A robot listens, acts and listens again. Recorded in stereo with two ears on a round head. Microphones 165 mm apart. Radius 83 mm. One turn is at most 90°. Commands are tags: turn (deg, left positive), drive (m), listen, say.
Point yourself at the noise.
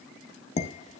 <turn deg="40"/>
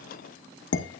<turn deg="90"/>
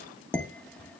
<say>Facing the dishes clattering.</say>